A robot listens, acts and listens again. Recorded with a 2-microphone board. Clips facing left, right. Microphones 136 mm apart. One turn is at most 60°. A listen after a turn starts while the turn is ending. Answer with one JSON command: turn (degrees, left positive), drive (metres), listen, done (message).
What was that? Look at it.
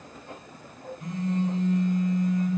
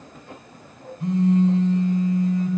{"turn": -30}
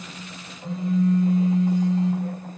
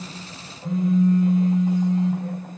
{"done": "Facing the phone buzzing, 1 to 2 m away."}